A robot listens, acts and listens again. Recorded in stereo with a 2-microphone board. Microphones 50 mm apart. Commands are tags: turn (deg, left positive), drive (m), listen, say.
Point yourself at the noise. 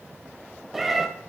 <turn deg="-30"/>
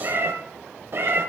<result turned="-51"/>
<turn deg="-130"/>
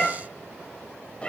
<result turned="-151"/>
<turn deg="20"/>
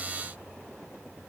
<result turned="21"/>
<say>Facing the cat meowing, under 1 m away.</say>